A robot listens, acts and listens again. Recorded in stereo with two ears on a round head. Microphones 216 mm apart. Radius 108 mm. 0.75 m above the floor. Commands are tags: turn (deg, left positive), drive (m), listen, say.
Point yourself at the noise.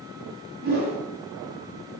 <turn deg="-40"/>
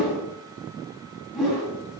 <say>Facing the whoosh.</say>